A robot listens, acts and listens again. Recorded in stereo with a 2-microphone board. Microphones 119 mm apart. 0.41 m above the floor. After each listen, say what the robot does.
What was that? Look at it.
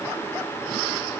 Keep listening.
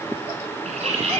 Turn 70° right.
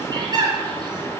Turn 40° right.
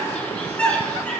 Turn 10° left.
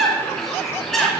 Facing the bird, 2 to 4 m away.